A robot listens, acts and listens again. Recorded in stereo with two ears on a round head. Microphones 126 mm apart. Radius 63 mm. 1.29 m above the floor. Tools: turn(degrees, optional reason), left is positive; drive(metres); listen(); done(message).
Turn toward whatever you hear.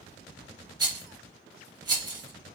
turn(degrees=-30, reason="The rattle: about 30° right or 150° right.")
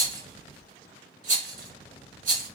turn(degrees=-115, reason="So it is at 115° right.")
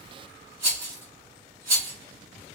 turn(degrees=-20, reason="The rattle is now 20° right.")
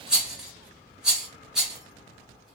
done("Facing the rattle, 1 to 2 m away.")